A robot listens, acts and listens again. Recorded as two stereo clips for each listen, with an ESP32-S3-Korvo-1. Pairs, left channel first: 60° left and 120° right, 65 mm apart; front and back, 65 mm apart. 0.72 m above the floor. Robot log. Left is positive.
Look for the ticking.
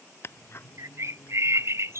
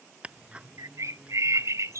note: The ticking: 110° left.
cmd yaw +110
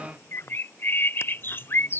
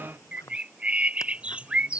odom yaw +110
note: The ticking is now 15° left.
cmd yaw +15
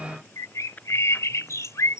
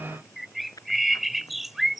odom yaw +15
end: Facing the ticking.